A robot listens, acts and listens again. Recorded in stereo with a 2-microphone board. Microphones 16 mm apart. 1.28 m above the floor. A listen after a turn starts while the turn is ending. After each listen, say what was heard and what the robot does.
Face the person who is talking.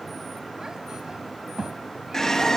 The child speaking: about 40° right or 140° right. Turn 40° right.
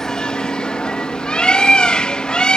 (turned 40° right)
Keep listening.
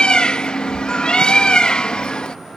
Keep listening.
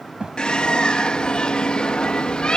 So it is at 100° right. Turn 100° right.
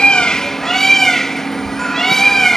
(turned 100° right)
Keep listening.
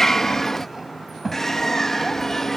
The child speaking is now 10° right. Turn 10° right.
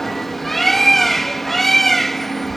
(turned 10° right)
Keep listening.
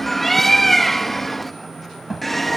Found it: a child speaking, straight ahead.